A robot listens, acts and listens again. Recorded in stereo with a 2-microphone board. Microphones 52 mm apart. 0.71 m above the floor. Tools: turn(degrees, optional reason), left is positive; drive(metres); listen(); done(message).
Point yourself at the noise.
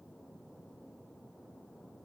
listen()
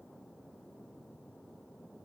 listen()
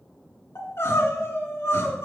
turn(degrees=60, reason="The crying: about 60° left or 120° left.")
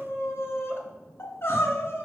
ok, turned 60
turn(degrees=55, reason="So it is at 55° left.")
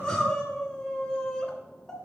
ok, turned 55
turn(degrees=15, reason="The crying is now 15° left.")
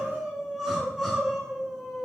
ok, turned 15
done("Facing the crying, 1 to 2 m away.")